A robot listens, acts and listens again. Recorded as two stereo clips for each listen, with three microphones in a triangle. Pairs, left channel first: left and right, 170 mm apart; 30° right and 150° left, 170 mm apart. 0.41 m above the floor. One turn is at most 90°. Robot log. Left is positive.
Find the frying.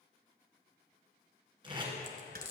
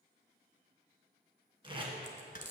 note: The frying: 105° left.
cmd yaw +90
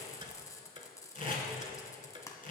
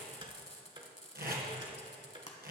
note: The frying is now 20° left.
cmd yaw +20
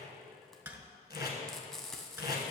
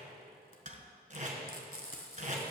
end: Found it: frying, straight ahead, 1 to 2 m away.